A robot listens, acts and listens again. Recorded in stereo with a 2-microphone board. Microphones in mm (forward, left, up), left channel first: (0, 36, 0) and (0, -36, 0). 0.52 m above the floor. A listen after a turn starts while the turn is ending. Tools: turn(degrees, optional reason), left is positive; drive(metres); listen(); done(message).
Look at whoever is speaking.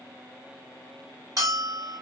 listen()
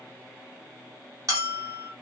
listen()
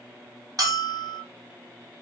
done("I can't make out anyone speaking, only a bell.")